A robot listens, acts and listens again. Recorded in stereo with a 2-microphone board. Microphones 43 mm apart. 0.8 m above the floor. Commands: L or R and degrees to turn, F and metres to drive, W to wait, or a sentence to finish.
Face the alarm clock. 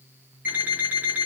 R40
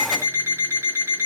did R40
R100
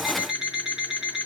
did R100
R20
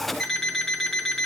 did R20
Facing the alarm clock, over 4 m away.